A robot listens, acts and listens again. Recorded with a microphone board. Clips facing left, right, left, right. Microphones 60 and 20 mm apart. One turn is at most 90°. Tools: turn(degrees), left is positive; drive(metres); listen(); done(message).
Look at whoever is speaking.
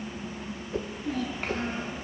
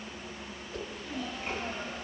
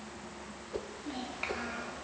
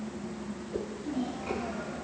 turn(degrees=60)
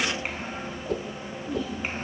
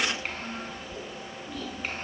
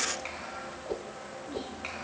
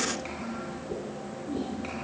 turn(degrees=20)
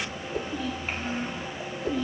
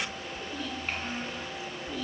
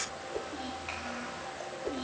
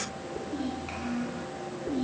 turn(degrees=15)
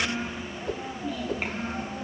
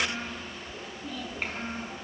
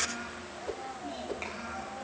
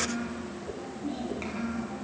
done("Facing the child speaking, over 4 m away.")